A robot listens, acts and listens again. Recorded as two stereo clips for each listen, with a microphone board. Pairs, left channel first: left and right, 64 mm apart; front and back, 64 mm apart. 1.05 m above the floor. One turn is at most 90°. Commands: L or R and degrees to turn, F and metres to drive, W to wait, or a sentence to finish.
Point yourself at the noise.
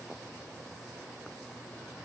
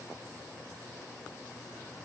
W
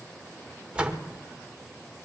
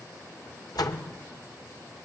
R15
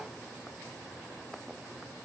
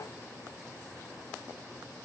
I heard a door slam from this way, but can't make it out now.